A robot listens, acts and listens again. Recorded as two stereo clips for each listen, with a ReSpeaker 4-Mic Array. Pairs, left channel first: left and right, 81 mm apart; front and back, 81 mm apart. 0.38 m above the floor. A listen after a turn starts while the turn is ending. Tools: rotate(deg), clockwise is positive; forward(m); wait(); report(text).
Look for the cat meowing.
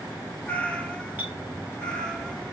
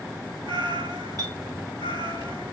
rotate(-170)
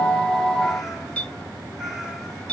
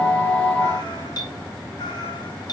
report("Found it: a cat meowing, straight ahead.")